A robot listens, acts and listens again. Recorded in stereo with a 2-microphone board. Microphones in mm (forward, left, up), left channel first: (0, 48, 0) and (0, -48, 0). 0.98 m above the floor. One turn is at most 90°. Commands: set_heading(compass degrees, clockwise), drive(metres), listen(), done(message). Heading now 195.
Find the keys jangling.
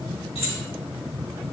set_heading(105)
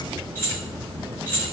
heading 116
set_heading(96)
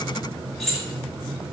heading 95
done("Found it: keys jangling, straight ahead.")